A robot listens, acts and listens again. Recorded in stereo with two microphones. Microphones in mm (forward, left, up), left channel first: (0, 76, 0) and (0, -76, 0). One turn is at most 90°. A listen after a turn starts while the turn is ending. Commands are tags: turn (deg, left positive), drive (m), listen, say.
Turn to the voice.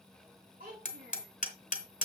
<turn deg="-90"/>
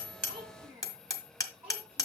<turn deg="-15"/>
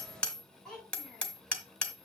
<say>Facing the child speaking.</say>